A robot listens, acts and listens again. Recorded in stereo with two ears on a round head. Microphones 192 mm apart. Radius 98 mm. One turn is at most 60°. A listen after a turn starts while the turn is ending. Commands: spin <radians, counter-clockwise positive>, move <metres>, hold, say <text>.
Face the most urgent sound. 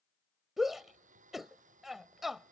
spin 0.52
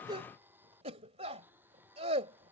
spin -0.52
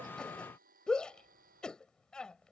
say Found it: a shout, straight ahead.